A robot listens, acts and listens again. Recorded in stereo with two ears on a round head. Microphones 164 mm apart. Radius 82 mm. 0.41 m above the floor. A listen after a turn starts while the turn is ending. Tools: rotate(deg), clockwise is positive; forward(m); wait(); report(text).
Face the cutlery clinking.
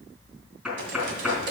rotate(70)
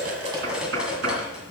report("Found it: cutlery clinking, straight ahead, 1 to 2 m away.")